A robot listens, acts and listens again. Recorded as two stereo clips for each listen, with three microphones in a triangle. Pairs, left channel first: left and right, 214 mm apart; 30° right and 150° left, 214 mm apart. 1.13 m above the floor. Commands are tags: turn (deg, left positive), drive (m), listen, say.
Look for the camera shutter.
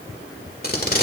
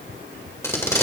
<listen/>
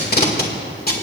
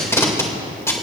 <listen/>
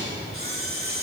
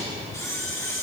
<turn deg="-105"/>
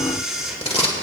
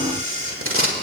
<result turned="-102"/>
<say>Facing the camera shutter.</say>